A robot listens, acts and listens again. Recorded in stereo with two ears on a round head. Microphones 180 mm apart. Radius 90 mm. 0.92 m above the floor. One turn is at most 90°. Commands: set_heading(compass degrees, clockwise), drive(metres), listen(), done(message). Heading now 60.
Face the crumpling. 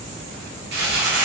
set_heading(120)
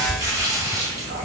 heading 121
set_heading(141)
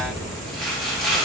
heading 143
done("Facing the crumpling.")